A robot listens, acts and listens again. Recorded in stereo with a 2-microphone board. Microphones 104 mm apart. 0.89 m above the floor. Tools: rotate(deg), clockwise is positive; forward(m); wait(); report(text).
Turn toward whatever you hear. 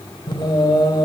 rotate(-45)
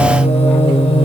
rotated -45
rotate(-100)
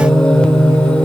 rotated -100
rotate(-10)
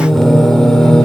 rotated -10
report("Found it: singing, straight ahead, 2 to 4 m away.")